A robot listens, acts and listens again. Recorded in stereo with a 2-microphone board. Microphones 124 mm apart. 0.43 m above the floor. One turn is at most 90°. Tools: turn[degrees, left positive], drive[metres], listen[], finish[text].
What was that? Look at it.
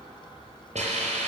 Thought: The hiss: about 70° right or 110° right.
Action: turn[-70]
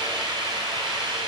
Thought: So it is at 40° right.
Action: turn[-40]
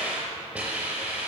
Thought: The hiss is now 15° right.
Action: turn[-15]
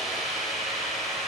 Action: finish[Found it: a hiss, straight ahead, over 4 m away.]